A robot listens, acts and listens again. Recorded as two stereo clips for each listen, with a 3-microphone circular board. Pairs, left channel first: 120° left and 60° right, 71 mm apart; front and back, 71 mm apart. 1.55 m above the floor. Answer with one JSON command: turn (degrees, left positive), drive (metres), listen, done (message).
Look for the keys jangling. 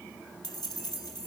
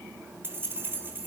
{"turn": 120}
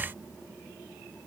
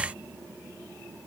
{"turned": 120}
{"listen": true}
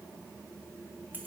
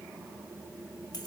{"done": "Facing the keys jangling."}